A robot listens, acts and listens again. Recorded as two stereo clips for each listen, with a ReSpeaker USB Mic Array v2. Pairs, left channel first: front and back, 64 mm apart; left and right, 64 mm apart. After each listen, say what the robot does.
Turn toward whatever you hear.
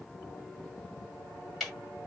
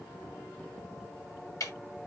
Turn 90° left.
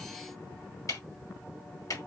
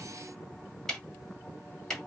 Turn 10° left.
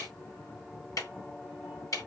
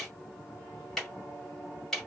Found it: ticking, straight ahead, 2 to 4 m away.